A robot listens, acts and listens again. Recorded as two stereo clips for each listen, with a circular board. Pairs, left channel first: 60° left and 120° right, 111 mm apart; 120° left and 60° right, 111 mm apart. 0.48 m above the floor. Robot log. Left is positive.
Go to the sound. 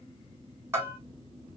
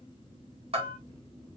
note: The bell: 55° right.
cmd yaw -55
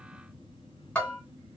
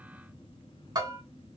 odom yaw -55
note: The bell is now 15° right.
cmd yaw -15
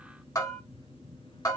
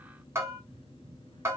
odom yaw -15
cmd fwd 1.0
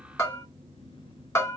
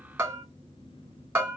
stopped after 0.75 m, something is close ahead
end: I am next to the bell.